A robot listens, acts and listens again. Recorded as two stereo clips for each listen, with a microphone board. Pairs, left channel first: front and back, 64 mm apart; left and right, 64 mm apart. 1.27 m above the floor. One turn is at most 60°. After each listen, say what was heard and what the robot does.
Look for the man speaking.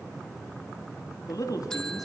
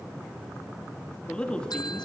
The man speaking: 15° left. Turn 15° left.
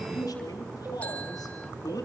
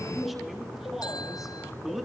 Facing the man speaking.